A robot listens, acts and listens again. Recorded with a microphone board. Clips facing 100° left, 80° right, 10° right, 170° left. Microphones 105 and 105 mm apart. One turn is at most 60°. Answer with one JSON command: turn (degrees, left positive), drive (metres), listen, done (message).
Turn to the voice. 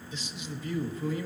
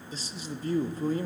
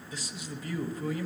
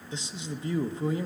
{"turn": -60}
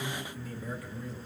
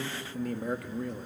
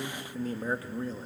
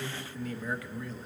{"turn": -60}
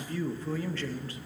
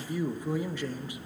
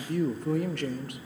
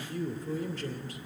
{"done": "Found it: a man speaking, straight ahead, under 1 m away."}